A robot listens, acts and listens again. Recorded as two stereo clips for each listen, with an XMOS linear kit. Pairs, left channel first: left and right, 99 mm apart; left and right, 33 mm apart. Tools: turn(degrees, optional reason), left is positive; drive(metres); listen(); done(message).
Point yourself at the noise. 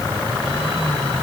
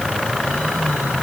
listen()
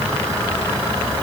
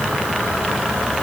listen()
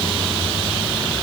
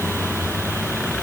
done("I can't make out anything to turn to.")